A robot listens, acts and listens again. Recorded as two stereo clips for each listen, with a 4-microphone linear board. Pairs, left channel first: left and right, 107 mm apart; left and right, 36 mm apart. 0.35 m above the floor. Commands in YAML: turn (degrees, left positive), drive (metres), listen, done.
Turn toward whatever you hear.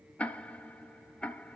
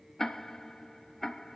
turn: 30
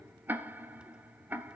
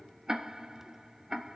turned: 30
turn: -20
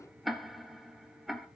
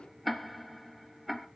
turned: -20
done: "Facing the ticking, 1 to 2 m away."